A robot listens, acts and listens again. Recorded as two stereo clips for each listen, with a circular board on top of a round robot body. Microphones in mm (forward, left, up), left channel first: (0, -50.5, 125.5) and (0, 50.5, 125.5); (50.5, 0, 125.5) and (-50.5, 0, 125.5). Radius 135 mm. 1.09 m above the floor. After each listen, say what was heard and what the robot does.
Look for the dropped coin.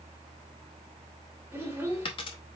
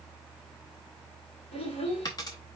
The dropped coin: 55° right. Turn 55° right.
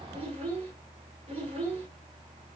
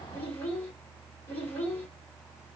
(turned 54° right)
I heard a dropped coin from this way, but can't make it out now.